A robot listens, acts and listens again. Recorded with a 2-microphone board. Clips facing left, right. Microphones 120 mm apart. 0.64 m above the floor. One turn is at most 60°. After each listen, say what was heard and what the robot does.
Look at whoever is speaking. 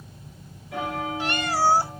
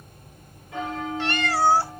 Keep listening.
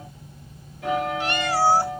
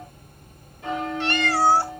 Keep listening.
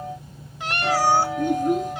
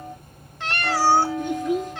The child speaking: about 50° left or 130° left. Turn 50° left.
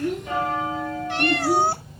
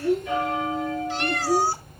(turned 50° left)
So it is at 75° left. Turn 60° left.
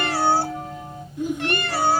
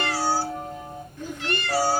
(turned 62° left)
The child speaking is now 15° left. Turn 15° left.
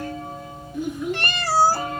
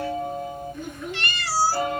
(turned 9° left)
Found it: a child speaking, straight ahead.